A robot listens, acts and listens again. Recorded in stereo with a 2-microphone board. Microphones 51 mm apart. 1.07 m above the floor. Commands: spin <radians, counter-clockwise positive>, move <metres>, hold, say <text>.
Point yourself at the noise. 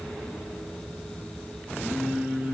spin -0.52
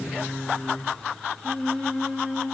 say Facing the singing, 1 to 2 m away.